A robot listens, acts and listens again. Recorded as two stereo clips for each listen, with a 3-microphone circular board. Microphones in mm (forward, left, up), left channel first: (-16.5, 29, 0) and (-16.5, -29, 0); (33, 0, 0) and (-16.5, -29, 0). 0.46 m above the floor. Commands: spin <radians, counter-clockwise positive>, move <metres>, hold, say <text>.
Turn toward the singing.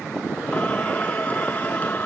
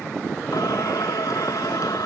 spin 0.52
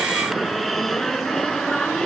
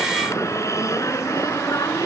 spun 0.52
spin 0.17
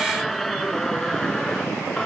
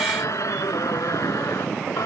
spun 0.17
say Found it: singing, straight ahead.